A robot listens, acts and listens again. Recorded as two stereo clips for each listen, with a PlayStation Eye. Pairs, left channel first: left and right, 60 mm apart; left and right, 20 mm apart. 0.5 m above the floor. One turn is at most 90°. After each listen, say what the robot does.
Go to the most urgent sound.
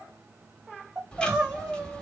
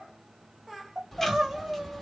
Turn 20° right.
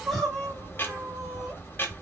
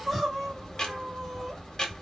Drive 1.0 m forward.
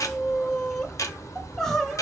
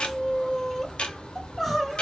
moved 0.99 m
Drive 1.0 m forward.
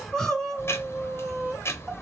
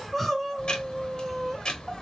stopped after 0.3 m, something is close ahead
I am next to the crying.